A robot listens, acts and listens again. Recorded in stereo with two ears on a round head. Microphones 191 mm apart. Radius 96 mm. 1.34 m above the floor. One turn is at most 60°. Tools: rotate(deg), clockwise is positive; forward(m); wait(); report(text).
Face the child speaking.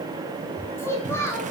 rotate(-30)
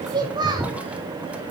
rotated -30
rotate(20)
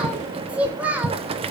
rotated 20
rotate(10)
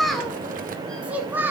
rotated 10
rotate(10)
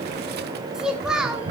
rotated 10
report("Found it: a child speaking, straight ahead, 1 to 2 m away.")